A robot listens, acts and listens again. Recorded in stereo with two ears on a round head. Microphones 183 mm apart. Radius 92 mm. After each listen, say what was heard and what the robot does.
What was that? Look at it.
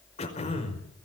The throat clearing: about 30° left or 150° left. Turn 30° left.
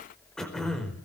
Facing the throat clearing, over 4 m away.